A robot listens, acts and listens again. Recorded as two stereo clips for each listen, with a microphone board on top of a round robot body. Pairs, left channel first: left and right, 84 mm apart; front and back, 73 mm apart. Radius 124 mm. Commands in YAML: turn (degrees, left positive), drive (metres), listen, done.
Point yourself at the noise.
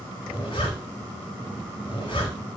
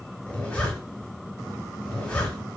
turn: 75
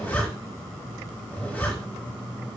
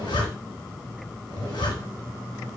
turn: 20
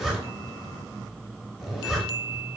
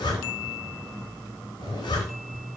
done: "Facing the zipper."